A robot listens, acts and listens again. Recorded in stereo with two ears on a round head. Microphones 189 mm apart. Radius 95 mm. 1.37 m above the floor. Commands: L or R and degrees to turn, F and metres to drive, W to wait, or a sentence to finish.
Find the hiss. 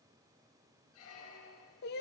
W
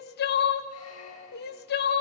W
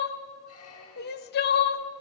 I can't make out a hiss, only crying and a squeak.